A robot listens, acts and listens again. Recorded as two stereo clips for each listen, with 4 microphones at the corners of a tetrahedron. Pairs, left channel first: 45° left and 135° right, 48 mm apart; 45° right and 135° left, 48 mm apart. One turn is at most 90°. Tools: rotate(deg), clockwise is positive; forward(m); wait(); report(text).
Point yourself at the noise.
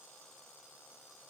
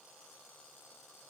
wait()
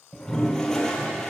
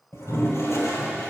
rotate(35)
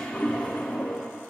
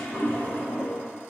report("Facing the toilet flushing, 2 to 4 m away.")